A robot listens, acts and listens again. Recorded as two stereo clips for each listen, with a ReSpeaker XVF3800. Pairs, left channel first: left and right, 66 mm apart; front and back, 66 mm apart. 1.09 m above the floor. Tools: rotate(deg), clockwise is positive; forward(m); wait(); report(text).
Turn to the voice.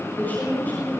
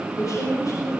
rotate(-25)
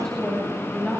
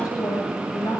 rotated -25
report("Facing the woman speaking.")